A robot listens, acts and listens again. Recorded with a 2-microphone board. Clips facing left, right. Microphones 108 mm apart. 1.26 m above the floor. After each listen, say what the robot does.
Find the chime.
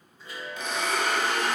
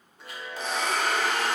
Turn 70° right.
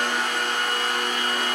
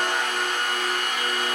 Keep listening.
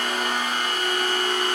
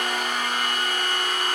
Keep listening.
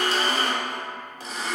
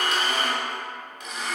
I heard a chime, but can't make it out now. It was about straight ahead or 40° right.